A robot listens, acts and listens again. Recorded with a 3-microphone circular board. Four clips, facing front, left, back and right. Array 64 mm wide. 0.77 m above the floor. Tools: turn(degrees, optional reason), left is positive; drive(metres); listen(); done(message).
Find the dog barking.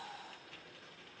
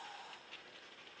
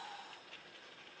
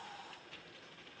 listen()
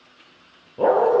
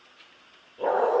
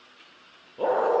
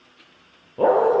turn(degrees=-70, reason="The dog barking: 70° right.")
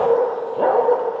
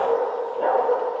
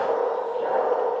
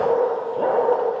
turn(degrees=-10, reason="The dog barking is now 10° right.")
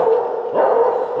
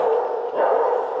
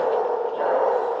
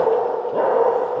done("Found it: a dog barking, straight ahead, over 4 m away.")